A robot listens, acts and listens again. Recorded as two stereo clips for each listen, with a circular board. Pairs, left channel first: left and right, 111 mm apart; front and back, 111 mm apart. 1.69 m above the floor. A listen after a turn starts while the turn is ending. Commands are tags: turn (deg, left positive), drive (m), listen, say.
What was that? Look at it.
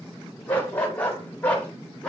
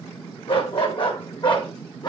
<turn deg="15"/>
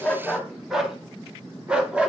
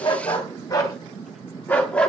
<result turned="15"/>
<turn deg="-50"/>
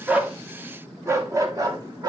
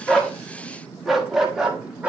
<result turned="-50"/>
<turn deg="-105"/>
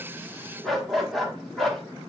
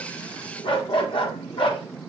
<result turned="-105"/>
<say>Found it: a dog barking, straight ahead, 1 to 2 m away.</say>